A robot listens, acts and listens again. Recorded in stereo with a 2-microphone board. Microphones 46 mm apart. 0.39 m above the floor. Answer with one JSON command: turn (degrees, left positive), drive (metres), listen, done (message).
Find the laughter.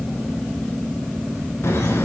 {"turn": 65}
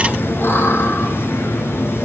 {"turn": 60}
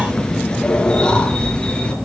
{"turn": 20}
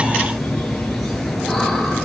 {"done": "Facing the laughter."}